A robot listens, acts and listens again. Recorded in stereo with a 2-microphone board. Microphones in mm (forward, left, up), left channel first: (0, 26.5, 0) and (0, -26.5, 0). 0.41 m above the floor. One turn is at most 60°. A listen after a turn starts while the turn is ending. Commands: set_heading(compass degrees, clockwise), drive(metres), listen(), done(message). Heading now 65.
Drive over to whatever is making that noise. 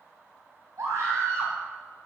set_heading(125)
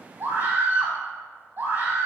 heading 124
set_heading(169)
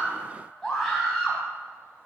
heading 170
drive(1.0)
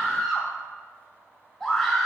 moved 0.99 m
drive(1.0)
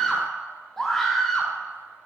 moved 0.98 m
set_heading(160)
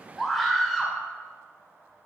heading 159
drive(1.0)
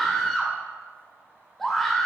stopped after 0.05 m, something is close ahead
done("Arrived at the scream, straight ahead.")